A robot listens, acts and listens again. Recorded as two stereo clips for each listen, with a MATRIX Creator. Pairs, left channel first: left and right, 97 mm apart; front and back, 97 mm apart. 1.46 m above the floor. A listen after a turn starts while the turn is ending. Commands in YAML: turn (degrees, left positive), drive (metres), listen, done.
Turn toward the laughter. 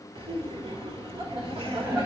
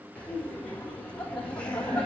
turn: -75
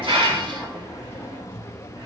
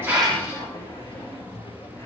turn: 20
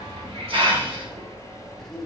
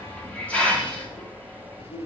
done: "Facing the laughter, 1 to 2 m away."